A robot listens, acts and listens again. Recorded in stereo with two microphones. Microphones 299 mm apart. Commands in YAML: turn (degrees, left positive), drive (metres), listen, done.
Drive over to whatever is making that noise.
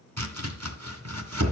turn: -60
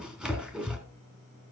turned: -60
drive: 1.0
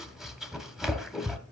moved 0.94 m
drive: 1.0
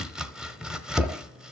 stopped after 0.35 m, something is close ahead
done: "Arrived at the chopping, straight ahead."